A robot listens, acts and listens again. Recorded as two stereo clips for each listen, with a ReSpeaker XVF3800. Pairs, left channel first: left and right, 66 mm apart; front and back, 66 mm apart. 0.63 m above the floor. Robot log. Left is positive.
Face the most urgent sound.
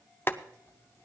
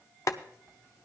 cmd idle
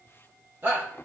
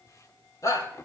note: The shout: 35° right.
cmd yaw -35
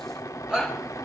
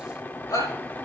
note: The shout is now 10° right.
cmd yaw -10
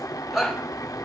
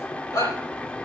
end: Facing the shout, over 4 m away.